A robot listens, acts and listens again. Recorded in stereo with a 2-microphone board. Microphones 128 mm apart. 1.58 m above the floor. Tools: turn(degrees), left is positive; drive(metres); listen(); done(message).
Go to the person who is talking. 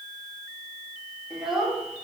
turn(degrees=-30)
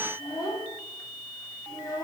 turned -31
turn(degrees=30)
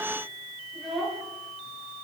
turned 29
drive(metres=1.0)
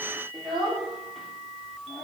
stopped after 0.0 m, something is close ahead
done("Something is in my way. I am facing the child speaking but have not reached it.")